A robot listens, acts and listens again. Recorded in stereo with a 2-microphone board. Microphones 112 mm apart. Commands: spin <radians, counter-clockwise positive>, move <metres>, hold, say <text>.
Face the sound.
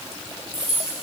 spin 0.52
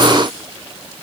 hold
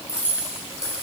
spin -0.52
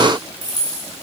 spin 0.70
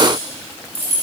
spin 0.35
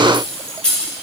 spin 0.17
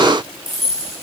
say Found it: keys jangling, straight ahead, 2 to 4 m away.